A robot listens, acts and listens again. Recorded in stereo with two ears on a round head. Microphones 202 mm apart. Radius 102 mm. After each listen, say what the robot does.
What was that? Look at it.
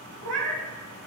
Turn 90° right.
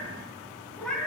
Facing the cat meowing, 2 to 4 m away.